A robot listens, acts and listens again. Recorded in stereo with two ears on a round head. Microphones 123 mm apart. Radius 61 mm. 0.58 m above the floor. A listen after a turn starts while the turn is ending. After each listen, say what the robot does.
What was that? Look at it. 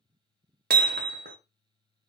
Turn 90° right.
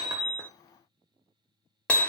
Turn 10° left.
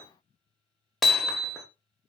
Facing the hammering.